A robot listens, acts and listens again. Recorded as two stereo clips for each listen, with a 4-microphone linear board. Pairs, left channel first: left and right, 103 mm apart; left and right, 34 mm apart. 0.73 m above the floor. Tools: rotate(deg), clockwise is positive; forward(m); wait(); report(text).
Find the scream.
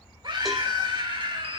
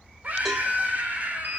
rotate(50)
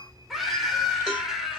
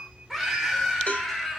report("Facing the scream.")